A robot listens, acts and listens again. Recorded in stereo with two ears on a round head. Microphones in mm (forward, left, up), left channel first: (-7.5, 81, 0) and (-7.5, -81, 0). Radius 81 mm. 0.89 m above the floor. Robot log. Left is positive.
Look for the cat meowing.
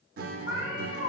note: The cat meowing: about 45° left or 135° left.
cmd yaw +45
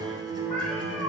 end: Facing the cat meowing, 2 to 4 m away.